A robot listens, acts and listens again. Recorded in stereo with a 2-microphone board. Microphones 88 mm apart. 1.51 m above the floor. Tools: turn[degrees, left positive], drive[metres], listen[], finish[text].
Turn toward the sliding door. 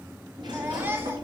Thought: The sliding door: about 60° right or 120° right.
Action: turn[-60]
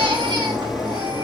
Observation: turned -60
Action: finish[Facing the sliding door.]